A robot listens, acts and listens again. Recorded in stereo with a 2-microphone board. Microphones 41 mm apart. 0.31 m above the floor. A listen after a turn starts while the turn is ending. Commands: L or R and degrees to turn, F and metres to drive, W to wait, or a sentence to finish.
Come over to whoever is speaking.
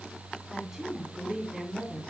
R30
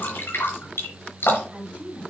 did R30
R140
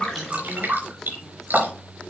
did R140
W
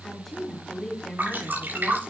F1.0
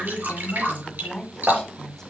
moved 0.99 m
L15
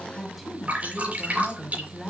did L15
F1.0
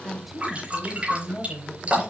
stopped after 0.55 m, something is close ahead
Arrived at the woman speaking, straight ahead.